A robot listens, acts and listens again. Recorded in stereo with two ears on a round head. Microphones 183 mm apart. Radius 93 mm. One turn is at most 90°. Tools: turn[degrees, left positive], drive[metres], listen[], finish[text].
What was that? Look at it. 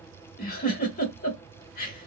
Thought: The giggle: about 40° left or 140° left.
Action: turn[40]
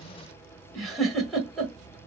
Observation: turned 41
Action: finish[Found it: a giggle, straight ahead, 1 to 2 m away.]